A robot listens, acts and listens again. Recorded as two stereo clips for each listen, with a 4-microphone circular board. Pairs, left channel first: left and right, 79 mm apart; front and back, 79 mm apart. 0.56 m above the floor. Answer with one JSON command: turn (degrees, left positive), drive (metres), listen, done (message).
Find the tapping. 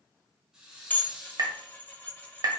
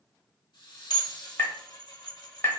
{"turn": -55}
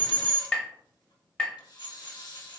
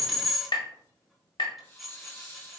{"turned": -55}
{"turn": 15}
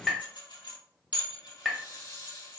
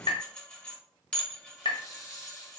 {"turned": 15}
{"done": "Found it: tapping, straight ahead, under 1 m away."}